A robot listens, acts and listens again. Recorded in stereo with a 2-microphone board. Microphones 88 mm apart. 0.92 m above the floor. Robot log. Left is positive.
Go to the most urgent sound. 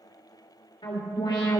note: The alarm: about 65° left or 115° left.
cmd yaw +65
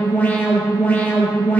note: So it is at 25° left.
cmd yaw +25
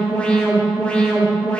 note: The alarm is now 15° left.
cmd yaw +15
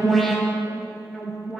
cmd fwd 1.0
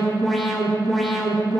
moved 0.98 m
cmd fwd 1.0
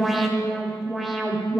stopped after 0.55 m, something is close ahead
end: I am next to the alarm.